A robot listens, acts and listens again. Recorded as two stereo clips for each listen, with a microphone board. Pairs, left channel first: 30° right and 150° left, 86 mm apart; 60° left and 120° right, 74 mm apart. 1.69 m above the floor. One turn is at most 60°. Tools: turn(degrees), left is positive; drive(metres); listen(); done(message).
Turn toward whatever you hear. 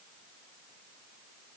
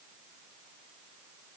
listen()
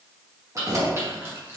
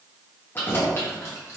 turn(degrees=60)
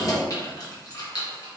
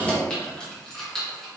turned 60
turn(degrees=-25)
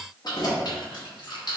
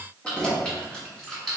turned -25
turn(degrees=-25)
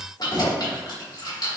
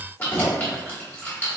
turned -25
done("Found it: keys jangling, straight ahead.")